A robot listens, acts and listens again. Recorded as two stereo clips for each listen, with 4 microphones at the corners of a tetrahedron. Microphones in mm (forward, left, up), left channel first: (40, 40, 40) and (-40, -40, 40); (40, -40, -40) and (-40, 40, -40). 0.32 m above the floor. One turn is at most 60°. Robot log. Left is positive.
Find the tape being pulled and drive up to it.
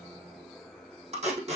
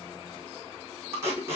note: The tape being pulled: 155° right.
cmd yaw -60
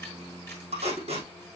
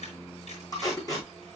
note: The tape being pulled is now 105° right.
cmd yaw -60
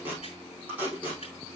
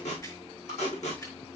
note: The tape being pulled is now 60° right.
cmd yaw -60
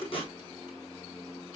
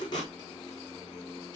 cmd fwd 1.0
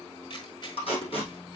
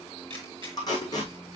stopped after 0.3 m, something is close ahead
note: The tape being pulled is now 10° left.
cmd yaw +10
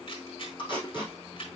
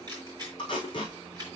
end: Blocked. The tape being pulled is further on, straight ahead.